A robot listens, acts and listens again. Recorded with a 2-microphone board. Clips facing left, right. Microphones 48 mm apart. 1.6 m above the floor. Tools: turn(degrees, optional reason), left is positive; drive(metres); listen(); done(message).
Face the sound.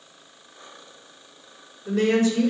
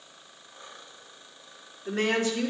turn(degrees=-35, reason="The woman speaking: about 35° right or 145° right.")
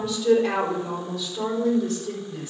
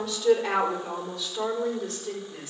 turn(degrees=-10, reason="So it is at 10° right.")
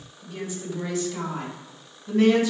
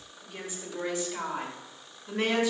turn(degrees=-10, reason="The woman speaking is now 10° right.")
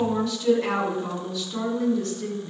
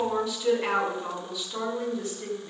done("Found it: a woman speaking, straight ahead.")